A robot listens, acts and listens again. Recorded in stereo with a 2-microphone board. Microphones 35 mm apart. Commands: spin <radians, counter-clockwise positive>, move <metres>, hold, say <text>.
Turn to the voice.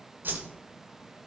hold
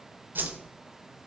hold
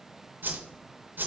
say I can't make out anyone speaking, only a whoosh.